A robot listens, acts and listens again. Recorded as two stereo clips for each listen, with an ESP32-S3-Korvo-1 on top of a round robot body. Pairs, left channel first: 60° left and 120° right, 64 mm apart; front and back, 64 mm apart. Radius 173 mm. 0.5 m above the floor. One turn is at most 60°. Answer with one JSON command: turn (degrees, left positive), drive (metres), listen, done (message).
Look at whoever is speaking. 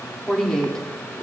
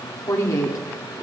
{"turn": -20}
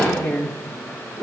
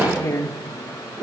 {"done": "Facing the woman speaking, 2 to 4 m away."}